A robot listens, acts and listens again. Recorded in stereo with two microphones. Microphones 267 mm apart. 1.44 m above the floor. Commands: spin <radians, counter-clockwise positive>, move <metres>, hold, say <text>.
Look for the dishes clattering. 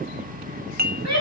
spin -0.61
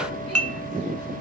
spin -1.83
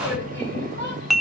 say Facing the dishes clattering, 1 to 2 m away.